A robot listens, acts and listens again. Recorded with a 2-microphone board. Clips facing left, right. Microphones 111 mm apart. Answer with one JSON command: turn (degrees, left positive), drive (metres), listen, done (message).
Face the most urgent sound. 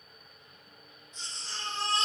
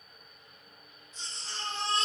{"turn": -30}
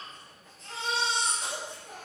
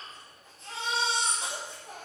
{"turn": -150}
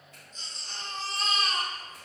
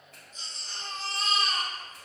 {"turn": -10}
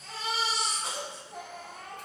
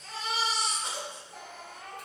{"done": "Found it: a baby crying, straight ahead, 1 to 2 m away."}